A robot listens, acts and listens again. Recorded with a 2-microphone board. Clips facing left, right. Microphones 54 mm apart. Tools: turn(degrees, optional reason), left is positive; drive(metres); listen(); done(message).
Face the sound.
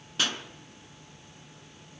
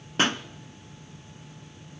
turn(degrees=-35, reason="The pop: about 35° right or 145° right.")
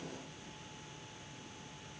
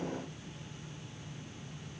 listen()
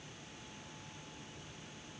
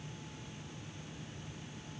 done("I heard a pop, but can't make it out now. It was about straight ahead or 110° right.")